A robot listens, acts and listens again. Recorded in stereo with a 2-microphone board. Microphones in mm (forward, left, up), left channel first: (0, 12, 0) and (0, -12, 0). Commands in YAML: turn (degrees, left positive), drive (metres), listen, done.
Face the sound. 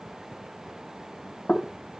turn: 40
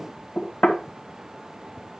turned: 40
turn: 95
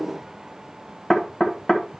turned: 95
turn: 20
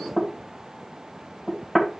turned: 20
done: "Found it: knocking, straight ahead."